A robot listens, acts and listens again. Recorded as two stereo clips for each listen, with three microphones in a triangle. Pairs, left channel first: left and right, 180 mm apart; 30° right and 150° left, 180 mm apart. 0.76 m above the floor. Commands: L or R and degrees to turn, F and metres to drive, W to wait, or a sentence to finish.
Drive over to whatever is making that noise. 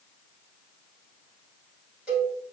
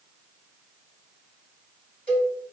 R175
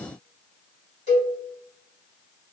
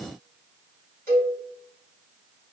L40
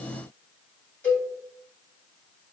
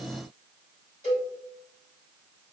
L10
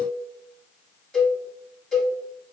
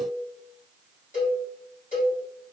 F1.0
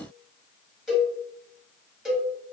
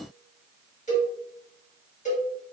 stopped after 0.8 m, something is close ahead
I am next to the cowbell.